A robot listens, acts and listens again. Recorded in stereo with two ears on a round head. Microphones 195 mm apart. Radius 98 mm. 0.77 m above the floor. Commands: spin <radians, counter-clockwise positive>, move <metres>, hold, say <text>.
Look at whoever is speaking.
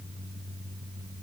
hold
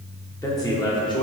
spin 0.44
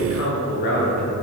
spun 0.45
spin 2.01
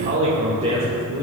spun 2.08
spin -0.52
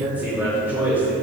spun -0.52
spin -0.17
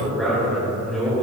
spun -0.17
say Found it: a man speaking, straight ahead, 2 to 4 m away.